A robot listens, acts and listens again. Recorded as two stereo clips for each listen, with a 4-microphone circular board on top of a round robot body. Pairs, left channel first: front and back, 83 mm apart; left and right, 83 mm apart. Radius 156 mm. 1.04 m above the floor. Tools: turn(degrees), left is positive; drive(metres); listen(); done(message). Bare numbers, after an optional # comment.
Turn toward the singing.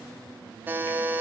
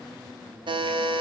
listen()
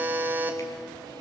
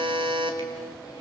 listen()
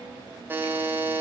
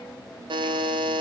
done("I can't make out singing, only a buzzer.")